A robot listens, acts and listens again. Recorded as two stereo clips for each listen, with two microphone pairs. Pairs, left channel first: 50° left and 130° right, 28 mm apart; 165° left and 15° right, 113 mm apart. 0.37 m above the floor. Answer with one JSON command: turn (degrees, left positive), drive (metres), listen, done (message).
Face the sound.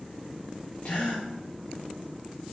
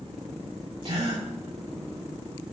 {"turn": 25}
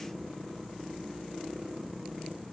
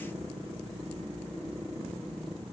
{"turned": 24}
{"done": "Facing where the gasp came from. I can't hear it now."}